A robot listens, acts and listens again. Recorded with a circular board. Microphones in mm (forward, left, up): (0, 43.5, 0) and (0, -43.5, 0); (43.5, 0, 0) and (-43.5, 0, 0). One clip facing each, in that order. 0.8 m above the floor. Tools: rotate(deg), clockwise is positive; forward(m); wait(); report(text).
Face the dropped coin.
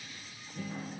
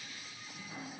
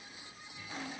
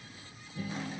wait()
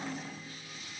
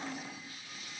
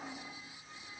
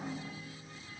wait()
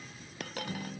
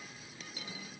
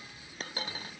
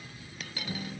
rotate(-60)
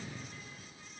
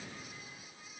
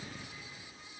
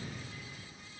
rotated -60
report("I heard a dropped coin from this way, but can't make it out now.")